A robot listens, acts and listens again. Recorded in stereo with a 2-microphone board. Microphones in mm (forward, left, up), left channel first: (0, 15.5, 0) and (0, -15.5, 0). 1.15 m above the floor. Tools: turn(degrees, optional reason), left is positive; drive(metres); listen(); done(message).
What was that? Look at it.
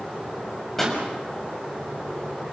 turn(degrees=30)
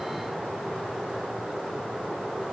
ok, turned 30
listen()
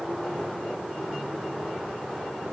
done("I heard a pop, but can't make it out now. It was about 20° right or 140° left.")